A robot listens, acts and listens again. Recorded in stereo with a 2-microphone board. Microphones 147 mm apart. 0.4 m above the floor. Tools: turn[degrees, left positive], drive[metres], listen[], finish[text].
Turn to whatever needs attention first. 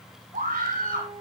Thought: The scream: about 75° right or 105° right.
Action: turn[-75]
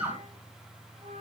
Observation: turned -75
Thought: So it is at 15° right.
Action: turn[-15]
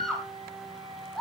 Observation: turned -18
Action: finish[Found it: a scream, straight ahead.]